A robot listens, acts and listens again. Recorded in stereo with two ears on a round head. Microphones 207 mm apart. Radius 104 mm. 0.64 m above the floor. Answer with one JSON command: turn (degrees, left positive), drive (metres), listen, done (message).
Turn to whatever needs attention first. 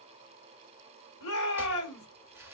{"turn": 70}
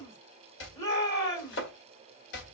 {"turn": 15}
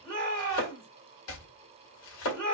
{"done": "Facing the shout, 2 to 4 m away."}